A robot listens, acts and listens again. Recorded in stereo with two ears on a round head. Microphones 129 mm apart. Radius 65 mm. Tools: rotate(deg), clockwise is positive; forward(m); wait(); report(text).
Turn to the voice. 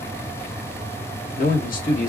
rotate(-60)
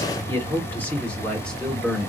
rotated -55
report("Facing the man speaking.")